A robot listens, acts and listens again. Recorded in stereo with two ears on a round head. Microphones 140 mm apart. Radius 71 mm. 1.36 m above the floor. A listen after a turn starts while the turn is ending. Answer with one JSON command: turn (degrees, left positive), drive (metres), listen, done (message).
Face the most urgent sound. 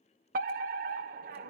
{"turn": -55}
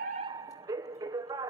{"turn": -25}
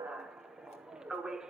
{"done": "Facing the fire alarm, 1 to 2 m away."}